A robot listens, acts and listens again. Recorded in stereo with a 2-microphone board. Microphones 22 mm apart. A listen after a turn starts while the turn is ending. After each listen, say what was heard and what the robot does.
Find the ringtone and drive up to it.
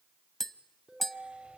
The ringtone: about 40° right or 140° right. Turn 40° right.
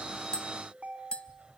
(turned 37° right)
So it is at 100° right. Turn 100° right.
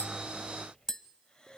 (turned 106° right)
Drive 1.0 m forward.
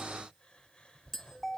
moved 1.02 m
Drive 1.0 m forward.
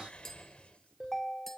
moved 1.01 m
Drive 1.0 m forward.
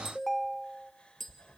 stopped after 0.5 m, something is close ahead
Arrived at the ringtone, straight ahead.